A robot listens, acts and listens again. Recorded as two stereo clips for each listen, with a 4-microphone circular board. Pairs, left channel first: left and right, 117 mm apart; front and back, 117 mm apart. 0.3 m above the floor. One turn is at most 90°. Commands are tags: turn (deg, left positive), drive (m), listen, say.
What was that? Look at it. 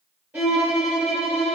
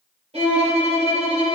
<turn deg="-90"/>
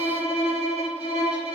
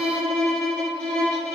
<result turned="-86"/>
<turn deg="-80"/>
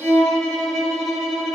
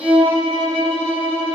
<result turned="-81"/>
<say>Facing the violin, 2 to 4 m away.</say>